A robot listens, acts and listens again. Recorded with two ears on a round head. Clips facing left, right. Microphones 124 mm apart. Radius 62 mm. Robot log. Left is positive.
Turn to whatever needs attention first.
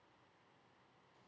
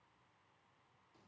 cmd idle
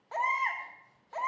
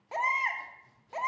note: The baby crying: about 15° right or 165° right.
cmd yaw -15
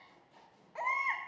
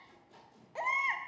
note: So it is at 150° right.
cmd yaw -150
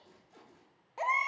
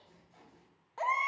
note: The baby crying is now 15° left.
cmd yaw +15
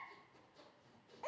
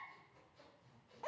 end: Facing the baby crying.